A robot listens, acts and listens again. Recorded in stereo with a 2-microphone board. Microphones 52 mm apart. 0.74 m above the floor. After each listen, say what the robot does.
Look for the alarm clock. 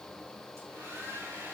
Keep listening.
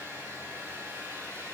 Keep listening.
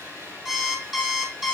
Turn 30° right.
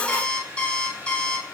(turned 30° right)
Turn 15° left.
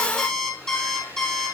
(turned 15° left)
Facing the alarm clock, 2 to 4 m away.